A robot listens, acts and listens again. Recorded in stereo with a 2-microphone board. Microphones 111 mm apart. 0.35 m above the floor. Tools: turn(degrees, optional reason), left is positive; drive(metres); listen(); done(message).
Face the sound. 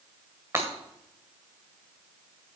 turn(degrees=-25, reason="The breaking glass: about 25° right or 155° right.")
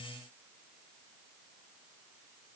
listen()
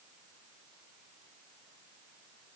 done("I heard breaking glass, but can't make it out now. It was about straight ahead or 130° right.")